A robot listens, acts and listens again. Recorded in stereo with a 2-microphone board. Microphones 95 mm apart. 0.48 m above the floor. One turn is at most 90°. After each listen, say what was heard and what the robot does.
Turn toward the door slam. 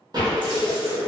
The door slam: about 45° right or 135° right. Turn 45° right.
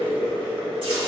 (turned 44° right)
Keep listening.
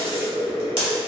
I heard a door slam, but can't make it out now. It was about straight ahead or 95° right.